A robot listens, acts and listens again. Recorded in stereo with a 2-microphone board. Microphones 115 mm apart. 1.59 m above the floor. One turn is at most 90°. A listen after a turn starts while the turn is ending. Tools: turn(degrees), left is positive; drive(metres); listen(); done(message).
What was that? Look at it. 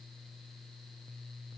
listen()
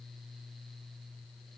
listen()
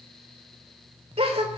turn(degrees=-55)
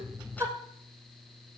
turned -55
turn(degrees=-30)
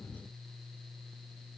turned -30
done("I heard a gasp from this way, but can't make it out now.")